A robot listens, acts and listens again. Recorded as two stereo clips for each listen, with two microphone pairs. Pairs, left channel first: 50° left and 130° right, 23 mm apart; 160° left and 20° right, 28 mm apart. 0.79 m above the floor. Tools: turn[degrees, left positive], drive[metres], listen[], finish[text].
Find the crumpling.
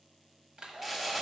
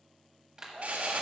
Thought: The crumpling: 40° right.
Action: turn[-40]
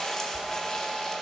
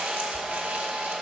Thought: The crumpling is now 10° right.
Action: turn[-10]
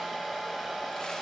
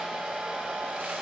Action: listen[]
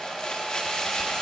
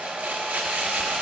Action: finish[Found it: crumpling, straight ahead.]